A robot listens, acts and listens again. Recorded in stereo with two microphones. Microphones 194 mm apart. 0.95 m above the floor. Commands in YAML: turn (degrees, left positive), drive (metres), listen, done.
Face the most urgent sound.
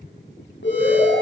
turn: 90
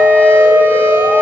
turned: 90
listen: true
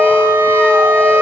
listen: true
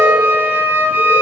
done: "Facing where the alarm came from. I can't hear it now."